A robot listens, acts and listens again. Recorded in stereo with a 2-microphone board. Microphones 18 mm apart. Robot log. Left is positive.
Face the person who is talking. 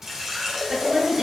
note: The woman speaking: about 40° right or 140° right.
cmd yaw -40
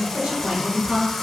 note: So it is at 100° right.
cmd yaw -100
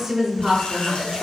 note: The woman speaking is now 35° right.
cmd yaw -35
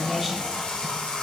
note: The woman speaking is now 10° right.
cmd yaw -10
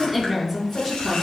end: Found it: a woman speaking, straight ahead, over 4 m away.